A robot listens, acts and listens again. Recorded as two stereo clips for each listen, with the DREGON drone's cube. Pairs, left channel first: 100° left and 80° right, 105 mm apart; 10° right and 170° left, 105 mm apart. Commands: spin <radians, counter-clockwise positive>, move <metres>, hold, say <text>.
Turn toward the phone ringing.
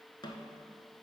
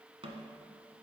hold
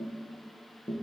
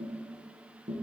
hold
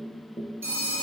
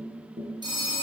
spin -2.53
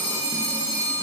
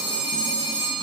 spin 0.52
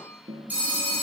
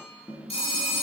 say Found it: a phone ringing, straight ahead, 1 to 2 m away.